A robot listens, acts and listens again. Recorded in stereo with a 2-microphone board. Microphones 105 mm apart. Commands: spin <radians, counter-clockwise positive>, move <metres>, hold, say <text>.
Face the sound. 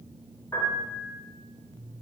spin 0.52
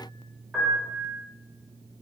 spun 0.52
say Found it: a piano, straight ahead, 1 to 2 m away.